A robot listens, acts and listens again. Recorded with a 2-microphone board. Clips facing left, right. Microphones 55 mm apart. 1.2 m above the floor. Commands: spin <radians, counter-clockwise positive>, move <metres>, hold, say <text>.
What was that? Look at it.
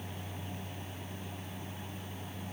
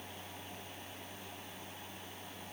hold
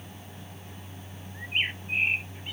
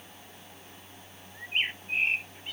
spin 0.52
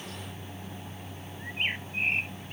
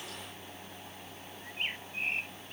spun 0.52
spin 2.53
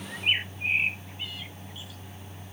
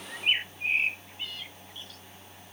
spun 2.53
spin 0.17
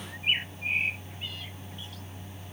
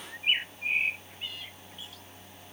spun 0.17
say Found it: a bird, straight ahead.